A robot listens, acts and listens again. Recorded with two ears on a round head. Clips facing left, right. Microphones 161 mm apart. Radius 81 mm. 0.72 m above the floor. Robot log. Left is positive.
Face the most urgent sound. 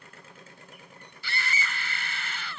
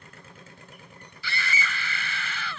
note: The scream: about 70° right or 110° right.
cmd yaw -70
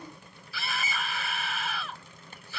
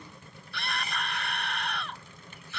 end: Facing the scream.